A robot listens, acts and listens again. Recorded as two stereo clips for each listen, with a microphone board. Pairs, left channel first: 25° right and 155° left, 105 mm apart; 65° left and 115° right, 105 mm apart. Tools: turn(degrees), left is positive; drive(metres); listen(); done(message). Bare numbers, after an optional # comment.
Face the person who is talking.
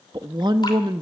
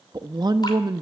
# The woman speaking: 160° right.
turn(-160)
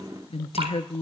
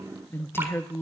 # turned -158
done("Facing the woman speaking, under 1 m away.")